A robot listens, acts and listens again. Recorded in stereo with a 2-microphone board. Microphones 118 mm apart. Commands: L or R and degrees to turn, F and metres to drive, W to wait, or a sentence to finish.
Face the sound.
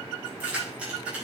R30
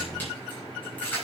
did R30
L15
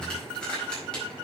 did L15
L10
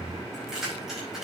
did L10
Facing the keys jangling, over 4 m away.